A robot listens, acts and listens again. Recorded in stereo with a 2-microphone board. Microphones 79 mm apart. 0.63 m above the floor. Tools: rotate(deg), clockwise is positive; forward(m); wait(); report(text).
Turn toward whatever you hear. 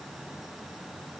wait()
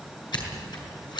rotate(-65)
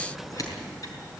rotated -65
rotate(-50)
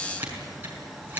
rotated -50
rotate(25)
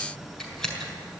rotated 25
rotate(-10)
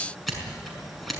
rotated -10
report("Found it: scissors, straight ahead.")